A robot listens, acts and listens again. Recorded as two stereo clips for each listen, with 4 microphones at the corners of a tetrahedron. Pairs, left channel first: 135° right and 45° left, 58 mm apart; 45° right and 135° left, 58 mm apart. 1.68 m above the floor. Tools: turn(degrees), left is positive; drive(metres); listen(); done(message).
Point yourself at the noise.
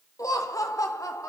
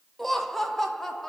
turn(degrees=-130)
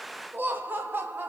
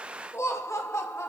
turn(degrees=-10)
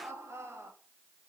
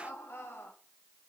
done("Facing the laughter, 2 to 4 m away.")